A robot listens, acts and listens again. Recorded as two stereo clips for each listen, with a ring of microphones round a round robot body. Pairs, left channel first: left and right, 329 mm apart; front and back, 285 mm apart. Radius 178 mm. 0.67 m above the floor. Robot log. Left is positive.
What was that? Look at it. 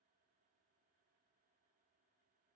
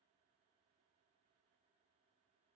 cmd idle
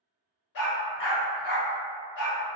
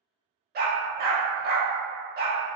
note: The dog barking: 125° left.
cmd yaw +125
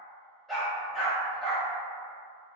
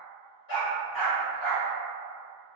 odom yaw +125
end: Facing the dog barking.